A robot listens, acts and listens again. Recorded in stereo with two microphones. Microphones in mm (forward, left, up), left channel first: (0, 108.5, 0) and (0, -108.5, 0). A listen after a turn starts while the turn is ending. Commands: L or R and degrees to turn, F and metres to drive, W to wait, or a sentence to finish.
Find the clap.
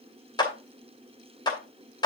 L20
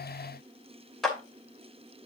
Facing the clap, 2 to 4 m away.